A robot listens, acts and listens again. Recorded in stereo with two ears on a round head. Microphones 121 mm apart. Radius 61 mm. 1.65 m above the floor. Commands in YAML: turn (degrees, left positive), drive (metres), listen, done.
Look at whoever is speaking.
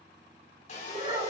turn: -45
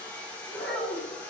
done: "Facing the child speaking."